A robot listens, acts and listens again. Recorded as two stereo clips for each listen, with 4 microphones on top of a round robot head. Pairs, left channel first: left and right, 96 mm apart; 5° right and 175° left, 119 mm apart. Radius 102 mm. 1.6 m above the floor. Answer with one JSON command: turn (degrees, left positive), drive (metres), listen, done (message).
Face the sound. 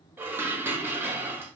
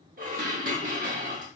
{"turn": -155}
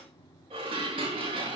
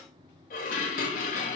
{"turn": -35}
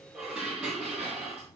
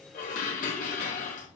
{"done": "Facing the dishes clattering."}